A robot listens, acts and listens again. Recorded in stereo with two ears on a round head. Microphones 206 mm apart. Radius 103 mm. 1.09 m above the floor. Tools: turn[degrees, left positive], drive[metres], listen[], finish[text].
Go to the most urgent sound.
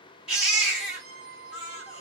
Action: turn[-30]
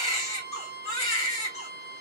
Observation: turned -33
Thought: So it is at 30° left.
Action: turn[30]
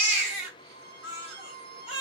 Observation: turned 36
Action: drive[1.0]
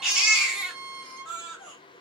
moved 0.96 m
Action: drive[1.0]
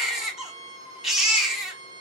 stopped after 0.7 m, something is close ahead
Action: finish[Arrived at the baby crying, straight ahead.]